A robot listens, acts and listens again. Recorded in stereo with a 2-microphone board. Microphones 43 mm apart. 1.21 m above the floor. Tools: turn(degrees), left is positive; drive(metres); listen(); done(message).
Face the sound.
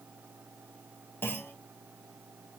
turn(degrees=55)
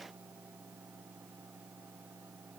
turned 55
listen()
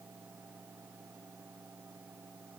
done("I heard a clunk, but can't make it out now. It was about straight ahead or 70° left.")